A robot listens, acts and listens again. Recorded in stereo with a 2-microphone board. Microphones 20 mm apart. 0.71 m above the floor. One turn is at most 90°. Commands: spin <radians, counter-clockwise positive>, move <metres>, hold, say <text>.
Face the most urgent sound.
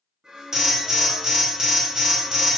spin -0.44
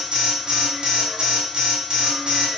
spin -1.57
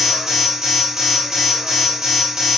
spin -0.52
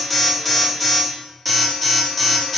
say Facing the alarm, 1 to 2 m away.